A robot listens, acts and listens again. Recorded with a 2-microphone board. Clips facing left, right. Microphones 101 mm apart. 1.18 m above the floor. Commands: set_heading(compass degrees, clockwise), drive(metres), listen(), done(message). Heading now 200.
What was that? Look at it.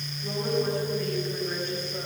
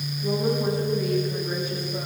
set_heading(230)
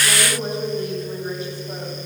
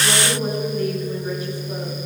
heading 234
set_heading(204)
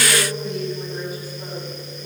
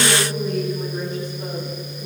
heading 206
set_heading(196)
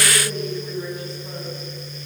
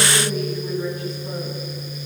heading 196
done("Found it: a woman speaking, straight ahead.")